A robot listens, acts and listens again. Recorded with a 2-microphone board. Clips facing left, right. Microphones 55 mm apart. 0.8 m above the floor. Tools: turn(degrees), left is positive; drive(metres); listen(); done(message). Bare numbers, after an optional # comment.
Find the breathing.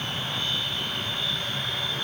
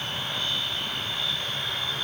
listen()
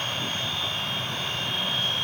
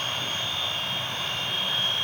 listen()
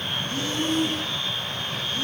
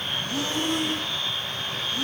turn(-90)
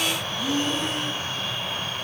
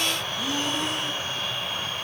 done("Facing the breathing.")